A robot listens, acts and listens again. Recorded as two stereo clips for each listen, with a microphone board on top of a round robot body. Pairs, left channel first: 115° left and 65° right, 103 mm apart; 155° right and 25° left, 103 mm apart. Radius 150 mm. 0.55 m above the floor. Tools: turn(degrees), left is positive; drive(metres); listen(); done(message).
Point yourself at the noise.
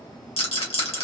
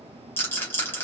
turn(degrees=135)
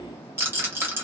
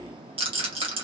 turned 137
done("Found it: a rattle, straight ahead.")